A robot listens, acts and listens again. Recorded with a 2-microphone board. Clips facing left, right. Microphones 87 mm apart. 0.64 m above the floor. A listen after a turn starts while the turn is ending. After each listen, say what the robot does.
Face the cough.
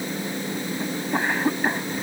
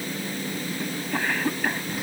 Turn 25° left.
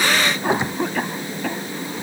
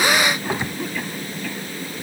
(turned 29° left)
Turn 125° left.
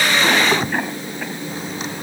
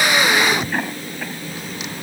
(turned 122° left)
Found it: a cough, straight ahead.